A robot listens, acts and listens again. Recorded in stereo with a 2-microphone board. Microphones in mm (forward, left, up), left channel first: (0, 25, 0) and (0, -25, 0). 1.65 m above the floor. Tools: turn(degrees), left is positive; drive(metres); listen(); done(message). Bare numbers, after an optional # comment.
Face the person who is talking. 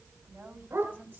# The woman speaking: about 30° right or 150° right.
turn(-30)
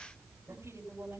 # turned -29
# So it is at 120° right.
turn(-120)
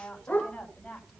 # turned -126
done("Facing the woman speaking, over 4 m away.")